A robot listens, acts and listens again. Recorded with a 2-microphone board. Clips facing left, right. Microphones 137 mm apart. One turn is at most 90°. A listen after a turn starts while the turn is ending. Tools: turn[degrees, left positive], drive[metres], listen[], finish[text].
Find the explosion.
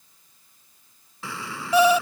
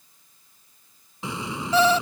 Thought: The explosion: about 20° right or 160° right.
Action: turn[-20]
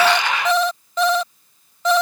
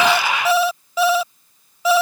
Action: listen[]
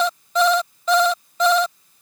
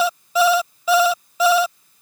Action: finish[I heard an explosion, but can't make it out now. It was about straight ahead or 140° right.]